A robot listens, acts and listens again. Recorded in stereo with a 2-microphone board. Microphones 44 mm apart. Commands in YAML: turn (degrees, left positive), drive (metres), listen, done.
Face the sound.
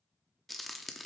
turn: 30
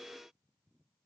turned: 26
listen: true
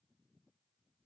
done: "I heard a crack, but can't make it out now. It was about 25° right or 155° left."